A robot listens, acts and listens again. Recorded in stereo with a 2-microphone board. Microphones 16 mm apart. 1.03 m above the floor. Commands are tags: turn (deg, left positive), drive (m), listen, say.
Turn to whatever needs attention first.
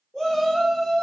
<turn deg="60"/>
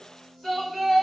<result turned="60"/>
<say>Found it: a shout, straight ahead, 1 to 2 m away.</say>